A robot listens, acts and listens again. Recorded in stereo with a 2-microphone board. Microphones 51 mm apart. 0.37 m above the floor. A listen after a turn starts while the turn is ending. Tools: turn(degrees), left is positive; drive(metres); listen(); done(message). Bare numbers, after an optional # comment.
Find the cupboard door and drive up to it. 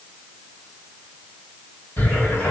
# The cupboard door: about 35° left or 145° left.
turn(35)
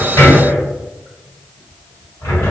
# So it is at 105° left.
turn(105)
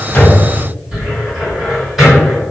# The cupboard door is now 10° right.
turn(-10)
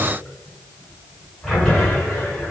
drive(1.0)
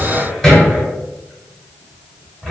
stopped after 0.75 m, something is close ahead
done("I am next to the cupboard door.")